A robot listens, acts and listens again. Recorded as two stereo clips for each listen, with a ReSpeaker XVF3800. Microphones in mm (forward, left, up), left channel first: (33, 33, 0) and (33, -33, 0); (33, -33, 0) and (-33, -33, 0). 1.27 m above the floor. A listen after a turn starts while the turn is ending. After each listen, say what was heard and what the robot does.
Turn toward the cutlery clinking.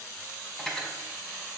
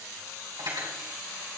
The cutlery clinking: 175° left. Turn 175° left.
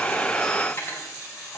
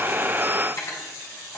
The cutlery clinking is now 35° left. Turn 35° left.
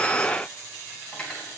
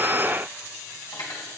The cutlery clinking is now 15° left. Turn 15° left.
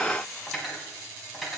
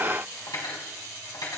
Found it: cutlery clinking, straight ahead.